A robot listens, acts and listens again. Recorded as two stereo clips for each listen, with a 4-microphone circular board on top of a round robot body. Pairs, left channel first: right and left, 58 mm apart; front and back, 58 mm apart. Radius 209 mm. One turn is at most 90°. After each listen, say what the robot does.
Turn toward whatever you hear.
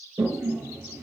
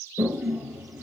Turn 90° left.
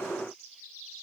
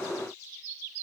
Turn 30° left.
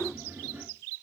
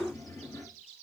Turn 25° left.
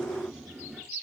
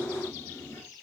Found it: a toilet flushing, straight ahead, 2 to 4 m away.